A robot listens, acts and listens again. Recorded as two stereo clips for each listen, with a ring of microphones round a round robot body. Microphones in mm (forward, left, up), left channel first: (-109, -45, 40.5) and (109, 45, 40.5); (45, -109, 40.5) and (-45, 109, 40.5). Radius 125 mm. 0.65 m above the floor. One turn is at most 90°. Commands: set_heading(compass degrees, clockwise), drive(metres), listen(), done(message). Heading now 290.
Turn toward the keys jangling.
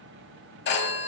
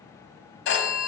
listen()
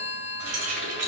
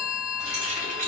set_heading(235)
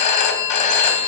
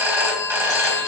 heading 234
listen()
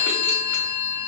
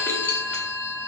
listen()
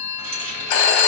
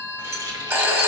set_heading(199)
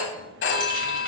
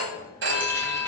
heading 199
listen()
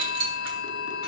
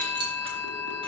set_heading(159)
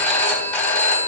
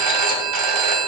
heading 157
listen()
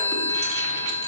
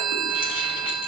listen()
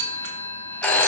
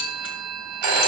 done("I heard keys jangling from this way, but can't make it out now.")